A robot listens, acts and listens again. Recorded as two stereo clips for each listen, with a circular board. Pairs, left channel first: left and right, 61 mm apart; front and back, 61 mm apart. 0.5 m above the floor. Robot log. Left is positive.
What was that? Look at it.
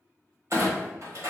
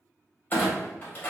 note: The clunk: 55° right.
cmd yaw -55
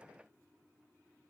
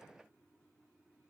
end: Facing where the clunk came from. I can't hear it now.